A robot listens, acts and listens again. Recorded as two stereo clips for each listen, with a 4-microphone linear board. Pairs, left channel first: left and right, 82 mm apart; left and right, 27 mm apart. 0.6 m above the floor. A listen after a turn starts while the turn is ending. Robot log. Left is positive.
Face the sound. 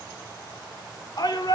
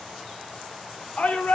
note: The shout: about 55° left or 125° left.
cmd yaw +55
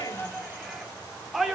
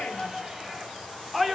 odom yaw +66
end: Facing the shout, 1 to 2 m away.